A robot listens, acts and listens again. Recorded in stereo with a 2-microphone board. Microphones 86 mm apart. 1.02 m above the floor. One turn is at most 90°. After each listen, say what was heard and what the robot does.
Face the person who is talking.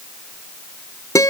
Keep listening.
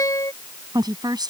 The woman speaking: about 50° right or 130° right. Turn 50° right.
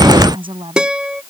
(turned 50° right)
So it is at 80° right. Turn 80° right.
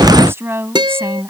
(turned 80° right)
The woman speaking is now 30° right. Turn 30° right.
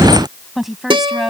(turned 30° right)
Found it: a woman speaking, straight ahead.